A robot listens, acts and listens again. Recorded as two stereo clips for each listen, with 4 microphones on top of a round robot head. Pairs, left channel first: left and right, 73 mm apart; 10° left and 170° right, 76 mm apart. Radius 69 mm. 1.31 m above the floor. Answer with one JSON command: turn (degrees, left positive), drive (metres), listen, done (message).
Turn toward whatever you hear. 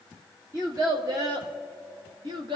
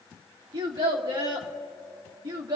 {"turn": -125}
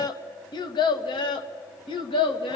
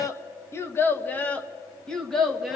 {"turn": 100}
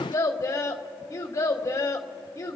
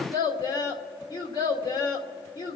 {"turn": 35}
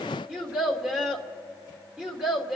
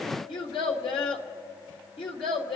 {"turn": -10}
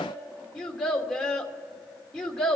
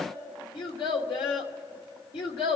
{"done": "Found it: a child speaking, straight ahead, 1 to 2 m away."}